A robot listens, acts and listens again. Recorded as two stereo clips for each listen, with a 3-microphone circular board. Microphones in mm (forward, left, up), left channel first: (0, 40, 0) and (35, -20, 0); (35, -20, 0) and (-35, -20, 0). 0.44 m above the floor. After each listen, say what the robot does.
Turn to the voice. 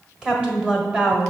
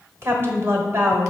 Turn 135° right.
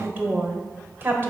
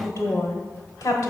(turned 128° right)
Turn 10° right.
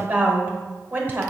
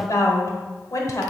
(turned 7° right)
Facing the woman speaking, 1 to 2 m away.